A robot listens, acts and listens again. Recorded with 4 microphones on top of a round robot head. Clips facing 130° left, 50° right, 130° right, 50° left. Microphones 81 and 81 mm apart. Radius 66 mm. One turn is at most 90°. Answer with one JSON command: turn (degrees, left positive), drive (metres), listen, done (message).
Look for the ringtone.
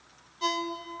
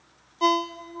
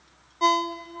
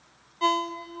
{"turn": -60}
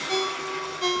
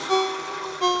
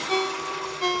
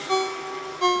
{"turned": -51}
{"turn": -10}
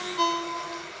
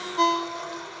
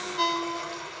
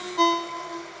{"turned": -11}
{"done": "Found it: a ringtone, straight ahead."}